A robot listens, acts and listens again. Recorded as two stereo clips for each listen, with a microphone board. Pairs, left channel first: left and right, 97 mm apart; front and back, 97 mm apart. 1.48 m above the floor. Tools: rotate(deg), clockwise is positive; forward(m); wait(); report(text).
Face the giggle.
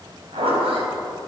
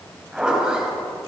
wait()
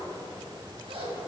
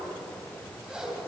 wait()
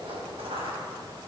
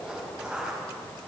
report("I can't make out a giggle to turn to.")